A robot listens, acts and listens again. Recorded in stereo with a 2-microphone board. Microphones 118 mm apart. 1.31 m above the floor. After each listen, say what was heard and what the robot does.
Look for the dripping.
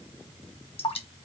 The dripping: about 60° left or 120° left. Turn 60° left.
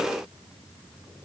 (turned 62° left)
Keep listening.
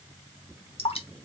So it is at 55° left. Turn 55° left.
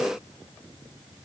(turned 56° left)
Keep listening.
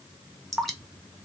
Facing the dripping.